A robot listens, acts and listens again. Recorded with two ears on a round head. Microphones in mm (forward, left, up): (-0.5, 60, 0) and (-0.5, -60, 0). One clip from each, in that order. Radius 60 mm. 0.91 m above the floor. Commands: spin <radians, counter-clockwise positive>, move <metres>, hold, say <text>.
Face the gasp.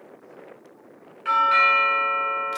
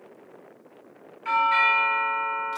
hold
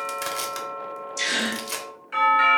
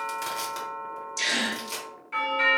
spin -0.35
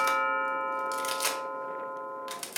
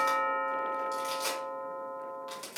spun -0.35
hold
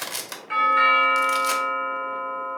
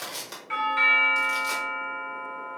say I heard a gasp, but can't make it out now. It was about straight ahead or 140° right.